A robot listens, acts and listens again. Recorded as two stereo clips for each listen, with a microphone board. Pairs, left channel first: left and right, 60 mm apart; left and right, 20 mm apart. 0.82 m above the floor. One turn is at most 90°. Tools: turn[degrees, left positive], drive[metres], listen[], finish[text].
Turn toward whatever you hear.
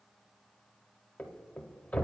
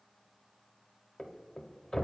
Thought: The thud: about 25° left or 155° left.
Action: turn[25]
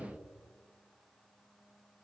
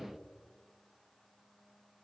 Action: listen[]
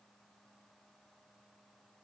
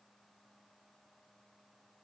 Action: finish[I heard a thud, but can't make it out now. It was about straight ahead or 130° left.]